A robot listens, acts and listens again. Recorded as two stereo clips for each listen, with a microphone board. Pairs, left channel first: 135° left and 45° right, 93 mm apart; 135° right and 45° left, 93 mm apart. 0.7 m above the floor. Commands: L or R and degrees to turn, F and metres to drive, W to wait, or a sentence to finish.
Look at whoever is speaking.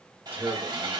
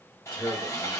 R115
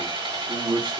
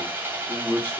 R70
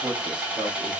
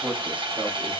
R30
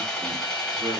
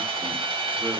W
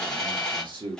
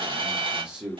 R35
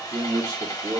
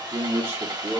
R15
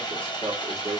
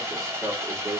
Facing the man speaking, 1 to 2 m away.